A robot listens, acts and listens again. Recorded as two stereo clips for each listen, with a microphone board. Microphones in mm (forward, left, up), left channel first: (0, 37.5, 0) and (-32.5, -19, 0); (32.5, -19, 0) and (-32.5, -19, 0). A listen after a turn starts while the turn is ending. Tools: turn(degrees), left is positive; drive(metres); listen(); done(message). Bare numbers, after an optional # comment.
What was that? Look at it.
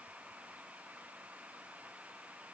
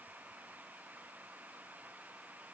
listen()
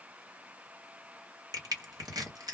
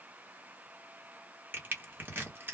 # The crushing: 120° right.
turn(-120)
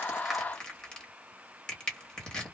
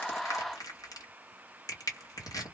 # The crushing is now 15° right.
turn(-15)
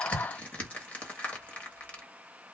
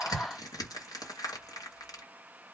done("Found it: crushing, straight ahead, 1 to 2 m away.")